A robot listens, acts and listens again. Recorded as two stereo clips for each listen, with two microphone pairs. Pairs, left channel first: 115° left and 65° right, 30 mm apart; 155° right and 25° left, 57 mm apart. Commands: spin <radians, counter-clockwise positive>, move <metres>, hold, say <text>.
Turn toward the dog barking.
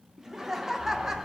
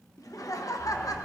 spin -1.75
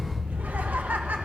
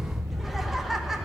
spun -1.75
spin 0.26
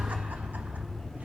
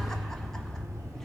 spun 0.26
spin 0.52
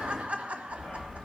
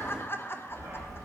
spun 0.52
spin 0.44
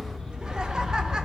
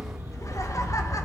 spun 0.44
say Facing the dog barking.